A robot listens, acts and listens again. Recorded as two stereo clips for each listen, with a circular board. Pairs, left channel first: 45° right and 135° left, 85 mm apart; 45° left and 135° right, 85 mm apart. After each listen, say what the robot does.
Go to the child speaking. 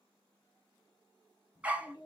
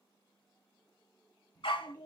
Turn 20° right.
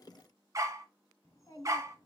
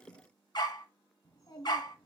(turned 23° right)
Drive 1.0 m forward.
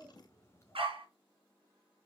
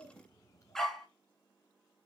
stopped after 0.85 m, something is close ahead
I am next to the child speaking.